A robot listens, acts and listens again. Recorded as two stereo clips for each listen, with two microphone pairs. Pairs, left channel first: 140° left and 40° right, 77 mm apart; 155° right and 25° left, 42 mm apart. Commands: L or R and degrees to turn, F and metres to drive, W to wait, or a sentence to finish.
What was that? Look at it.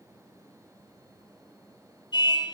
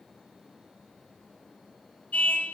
L150
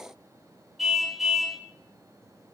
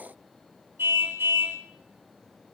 L50
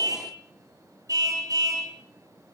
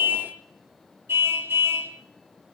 Found it: a car horn, straight ahead, 2 to 4 m away.